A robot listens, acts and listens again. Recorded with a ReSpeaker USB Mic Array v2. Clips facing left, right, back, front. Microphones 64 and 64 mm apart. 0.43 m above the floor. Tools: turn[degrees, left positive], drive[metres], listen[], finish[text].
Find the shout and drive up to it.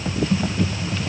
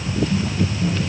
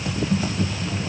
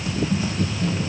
Action: listen[]
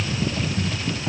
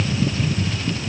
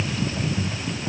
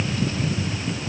Action: listen[]
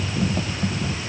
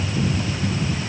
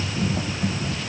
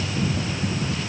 Action: finish[I can't make out a shout to turn to.]